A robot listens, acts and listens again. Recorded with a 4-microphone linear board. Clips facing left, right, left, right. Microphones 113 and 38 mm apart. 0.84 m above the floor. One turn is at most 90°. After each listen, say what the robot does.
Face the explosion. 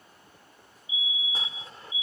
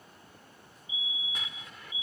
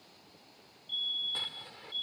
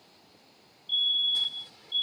Turn 35° left.
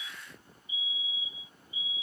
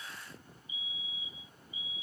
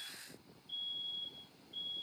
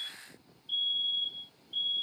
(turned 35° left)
Keep listening.
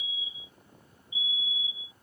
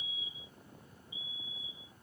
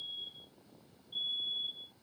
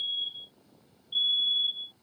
I heard an explosion, but can't make it out now. It was about straight ahead or 110° left.